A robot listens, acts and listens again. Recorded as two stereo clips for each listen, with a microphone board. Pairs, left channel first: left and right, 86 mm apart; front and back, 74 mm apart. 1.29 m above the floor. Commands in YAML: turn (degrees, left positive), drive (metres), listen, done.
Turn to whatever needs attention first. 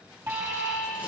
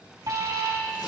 turn: -145
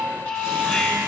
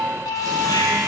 turn: 15
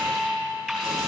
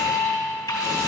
done: "Facing the alarm."